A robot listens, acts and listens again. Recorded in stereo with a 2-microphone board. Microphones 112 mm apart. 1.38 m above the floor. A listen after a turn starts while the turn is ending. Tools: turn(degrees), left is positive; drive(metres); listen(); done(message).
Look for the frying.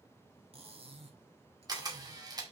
listen()
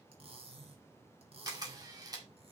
listen()
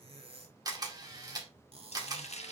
turn(degrees=90)
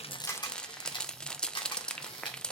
turn(degrees=10)
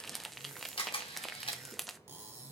done("Found it: frying, straight ahead.")